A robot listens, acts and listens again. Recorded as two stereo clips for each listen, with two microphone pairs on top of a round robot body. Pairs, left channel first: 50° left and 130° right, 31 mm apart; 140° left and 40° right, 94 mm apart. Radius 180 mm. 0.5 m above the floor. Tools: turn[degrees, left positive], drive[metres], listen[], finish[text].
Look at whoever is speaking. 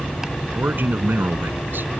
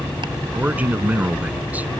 Thought: The man speaking: 115° right.
Action: turn[-115]
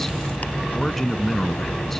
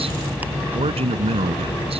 Thought: The man speaking is now 30° right.
Action: turn[-30]
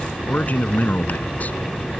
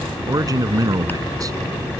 Thought: The man speaking is now 10° left.
Action: turn[10]
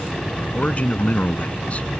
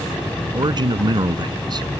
Action: finish[Found it: a man speaking, straight ahead.]